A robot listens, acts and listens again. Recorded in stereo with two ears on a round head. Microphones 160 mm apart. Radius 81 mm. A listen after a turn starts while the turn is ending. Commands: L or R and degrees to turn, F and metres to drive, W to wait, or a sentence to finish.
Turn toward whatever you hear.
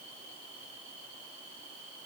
W
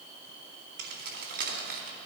R50
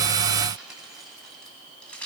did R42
L10
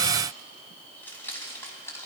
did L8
L15
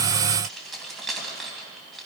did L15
Facing the keys jangling.